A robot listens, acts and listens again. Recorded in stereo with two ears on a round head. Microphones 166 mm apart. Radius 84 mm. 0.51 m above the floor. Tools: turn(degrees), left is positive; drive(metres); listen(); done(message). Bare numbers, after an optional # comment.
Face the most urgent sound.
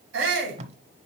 turn(-90)
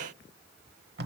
listen()
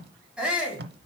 done("Found it: a shout, straight ahead.")